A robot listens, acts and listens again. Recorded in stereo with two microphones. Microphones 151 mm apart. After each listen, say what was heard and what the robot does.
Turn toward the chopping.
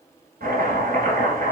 Turn 90° right.
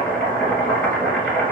Found it: chopping, straight ahead.